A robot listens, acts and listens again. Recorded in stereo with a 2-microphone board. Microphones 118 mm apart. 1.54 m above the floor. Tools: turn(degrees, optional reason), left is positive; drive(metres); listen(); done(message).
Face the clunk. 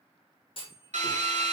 turn(degrees=50, reason="The clunk: about 50° left or 130° left.")
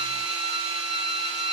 listen()
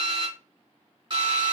done("I heard a clunk, but can't make it out now. It was about straight ahead or 80° left.")